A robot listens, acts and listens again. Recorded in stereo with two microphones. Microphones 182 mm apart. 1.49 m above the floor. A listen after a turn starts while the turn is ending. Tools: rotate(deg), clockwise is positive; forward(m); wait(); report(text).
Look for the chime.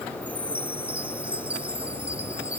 rotate(30)
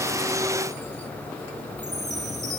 rotate(140)
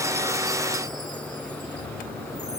wait()
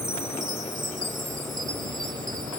rotate(45)
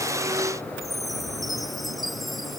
report("Facing the chime.")